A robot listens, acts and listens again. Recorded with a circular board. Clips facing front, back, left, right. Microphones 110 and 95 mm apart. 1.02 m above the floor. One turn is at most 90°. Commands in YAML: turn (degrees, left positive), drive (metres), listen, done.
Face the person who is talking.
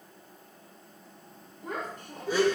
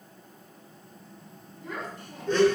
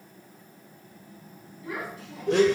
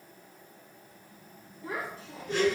turn: -35
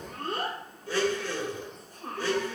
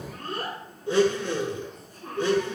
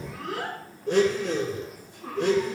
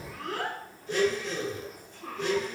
turn: 15
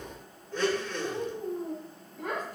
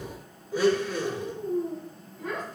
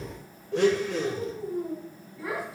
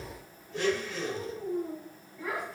turn: 10
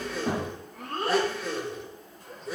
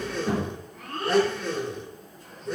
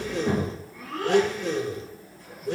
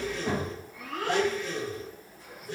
done: "Facing the child speaking, 2 to 4 m away."